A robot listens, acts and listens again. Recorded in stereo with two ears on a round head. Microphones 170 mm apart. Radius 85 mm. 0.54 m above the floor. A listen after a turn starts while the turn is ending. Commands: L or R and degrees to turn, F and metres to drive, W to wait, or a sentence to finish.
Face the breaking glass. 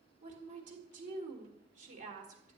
W
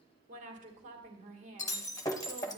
L20
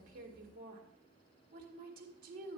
W
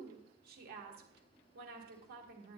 I heard breaking glass, but can't make it out now. It was about straight ahead or 140° left.